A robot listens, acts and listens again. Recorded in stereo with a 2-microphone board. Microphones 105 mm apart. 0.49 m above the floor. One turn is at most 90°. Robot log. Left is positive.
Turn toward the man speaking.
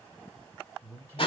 note: The man speaking: about 30° right or 150° right.
cmd yaw -30
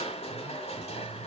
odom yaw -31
cmd idle
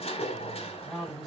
end: Facing the man speaking, 2 to 4 m away.